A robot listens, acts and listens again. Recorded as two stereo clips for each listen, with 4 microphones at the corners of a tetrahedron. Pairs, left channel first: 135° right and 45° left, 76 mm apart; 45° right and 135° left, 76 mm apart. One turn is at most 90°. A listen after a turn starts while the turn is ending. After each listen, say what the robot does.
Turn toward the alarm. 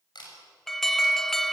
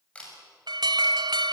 Turn 90° left.
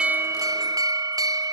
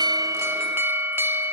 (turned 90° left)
Turn 80° left.
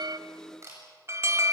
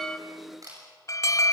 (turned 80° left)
Facing the alarm, under 1 m away.